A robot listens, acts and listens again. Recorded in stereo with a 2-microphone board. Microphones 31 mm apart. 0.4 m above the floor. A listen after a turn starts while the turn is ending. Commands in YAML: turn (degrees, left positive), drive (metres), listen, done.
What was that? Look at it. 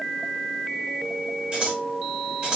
turn: -30
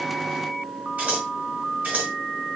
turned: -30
turn: -120
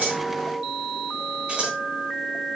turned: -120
turn: -45
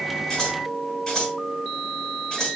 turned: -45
turn: 20
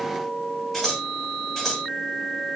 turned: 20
done: "Found it: scissors, straight ahead, over 4 m away."